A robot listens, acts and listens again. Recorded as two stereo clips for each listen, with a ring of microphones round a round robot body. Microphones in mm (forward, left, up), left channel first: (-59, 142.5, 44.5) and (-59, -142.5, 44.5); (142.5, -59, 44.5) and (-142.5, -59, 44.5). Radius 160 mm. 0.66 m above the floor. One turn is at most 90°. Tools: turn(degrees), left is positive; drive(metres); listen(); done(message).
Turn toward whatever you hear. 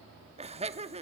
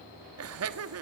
turn(degrees=-90)
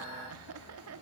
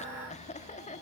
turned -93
turn(degrees=-65)
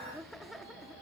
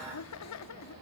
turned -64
done("Found it: laughter, straight ahead, 1 to 2 m away.")